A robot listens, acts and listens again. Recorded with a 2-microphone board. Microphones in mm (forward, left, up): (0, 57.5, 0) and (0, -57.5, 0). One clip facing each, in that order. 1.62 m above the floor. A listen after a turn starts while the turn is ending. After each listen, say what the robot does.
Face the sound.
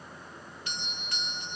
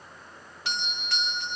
Turn 70° right.
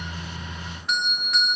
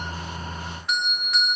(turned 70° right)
Found it: a doorbell, straight ahead.